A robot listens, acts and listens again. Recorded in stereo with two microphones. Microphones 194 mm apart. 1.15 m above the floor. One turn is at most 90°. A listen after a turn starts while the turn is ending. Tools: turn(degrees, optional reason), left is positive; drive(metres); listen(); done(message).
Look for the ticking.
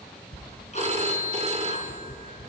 turn(degrees=35, reason="The ticking: about 35° left or 145° left.")
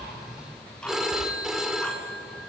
done("Facing the ticking, 2 to 4 m away.")